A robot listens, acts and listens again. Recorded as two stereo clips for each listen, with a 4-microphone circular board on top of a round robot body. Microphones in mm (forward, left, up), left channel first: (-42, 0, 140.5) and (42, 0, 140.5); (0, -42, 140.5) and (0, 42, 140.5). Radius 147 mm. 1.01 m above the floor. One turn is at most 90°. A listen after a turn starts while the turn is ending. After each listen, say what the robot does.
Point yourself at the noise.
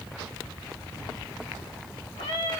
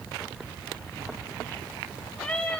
Turn 90° right.
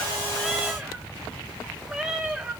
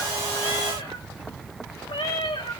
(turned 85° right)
Turn 80° right.
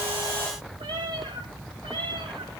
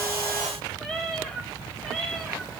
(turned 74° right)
Found it: a cat meowing, straight ahead.